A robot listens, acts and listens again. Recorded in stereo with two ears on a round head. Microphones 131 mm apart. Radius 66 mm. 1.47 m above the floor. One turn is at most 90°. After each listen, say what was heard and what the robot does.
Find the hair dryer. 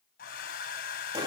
The hair dryer: about 65° left or 115° left. Turn 65° left.
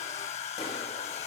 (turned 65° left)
So it is at 45° left. Turn 45° left.
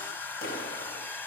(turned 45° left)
The hair dryer is now 15° left. Turn 15° left.
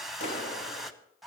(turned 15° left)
Facing the hair dryer.